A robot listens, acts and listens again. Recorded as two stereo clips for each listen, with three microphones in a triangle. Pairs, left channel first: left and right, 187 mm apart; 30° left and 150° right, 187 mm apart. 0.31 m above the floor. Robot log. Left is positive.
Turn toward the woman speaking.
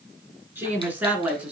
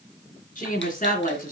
note: The woman speaking: 10° right.
cmd yaw -10
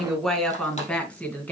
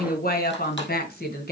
note: The woman speaking is now 10° left.
cmd yaw +10
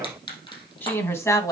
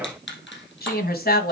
note: The woman speaking is now 20° left.
cmd yaw +20
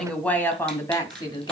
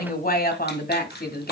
note: The woman speaking is now 30° left.
cmd yaw +30
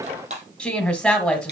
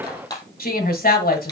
end: Facing the woman speaking, 1 to 2 m away.